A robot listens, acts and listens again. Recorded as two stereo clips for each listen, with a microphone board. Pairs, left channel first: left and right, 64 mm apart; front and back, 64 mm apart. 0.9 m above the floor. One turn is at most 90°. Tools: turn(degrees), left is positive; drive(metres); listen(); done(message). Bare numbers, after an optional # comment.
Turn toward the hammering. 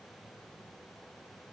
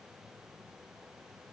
listen()
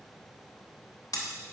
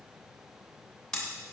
# The hammering: 80° left.
turn(80)
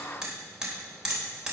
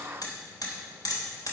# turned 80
# The hammering is now 10° right.
turn(-10)
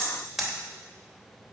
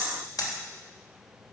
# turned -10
done("Found it: hammering, straight ahead, 2 to 4 m away.")